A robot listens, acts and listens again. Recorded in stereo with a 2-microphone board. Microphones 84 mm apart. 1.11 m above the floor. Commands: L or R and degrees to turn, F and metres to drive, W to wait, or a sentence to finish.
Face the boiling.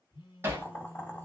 L25
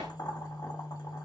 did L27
L130
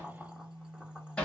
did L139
R10
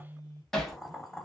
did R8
Facing the boiling, under 1 m away.